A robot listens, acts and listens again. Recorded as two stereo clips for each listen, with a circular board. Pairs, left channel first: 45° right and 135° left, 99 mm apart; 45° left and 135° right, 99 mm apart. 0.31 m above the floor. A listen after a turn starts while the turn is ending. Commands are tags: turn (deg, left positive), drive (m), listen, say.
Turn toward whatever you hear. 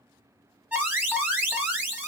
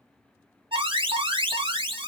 <turn deg="-155"/>
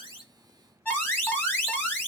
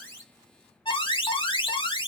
<turn deg="25"/>
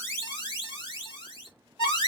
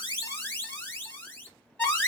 <turn deg="-25"/>
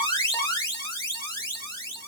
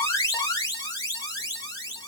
<say>Facing the alarm, 1 to 2 m away.</say>